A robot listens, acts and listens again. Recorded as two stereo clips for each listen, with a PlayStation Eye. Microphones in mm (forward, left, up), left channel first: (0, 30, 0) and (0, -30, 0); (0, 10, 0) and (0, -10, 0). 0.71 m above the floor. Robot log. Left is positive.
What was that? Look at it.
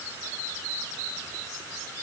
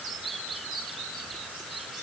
cmd idle
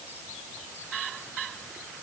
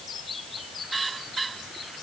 cmd idle
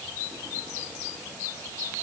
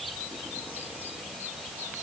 end: I can't make out anything.